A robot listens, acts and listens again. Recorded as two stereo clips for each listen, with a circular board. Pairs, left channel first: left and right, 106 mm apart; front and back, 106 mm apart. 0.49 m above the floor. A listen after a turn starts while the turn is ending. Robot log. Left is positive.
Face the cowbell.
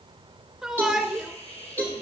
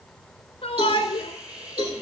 note: The cowbell: 160° left.
cmd yaw +160
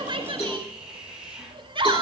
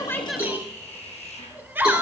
cmd idle
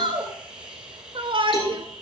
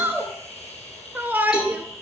cmd idle
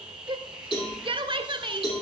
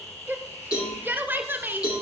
note: The cowbell is now 55° left.
cmd yaw +55
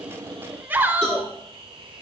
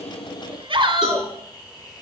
end: Facing the cowbell.